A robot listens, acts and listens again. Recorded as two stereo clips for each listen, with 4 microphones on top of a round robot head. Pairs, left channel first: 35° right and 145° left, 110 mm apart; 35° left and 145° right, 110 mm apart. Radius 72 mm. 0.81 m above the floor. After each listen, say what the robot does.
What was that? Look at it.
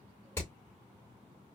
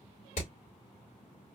Turn 35° left.
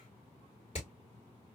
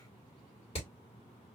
Found it: hammering, straight ahead.